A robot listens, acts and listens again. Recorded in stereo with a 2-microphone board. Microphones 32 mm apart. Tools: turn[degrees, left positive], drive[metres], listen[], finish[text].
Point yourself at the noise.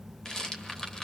Thought: The rattle: about 20° left or 160° left.
Action: turn[20]
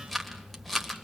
Action: finish[Found it: a rattle, straight ahead, 1 to 2 m away.]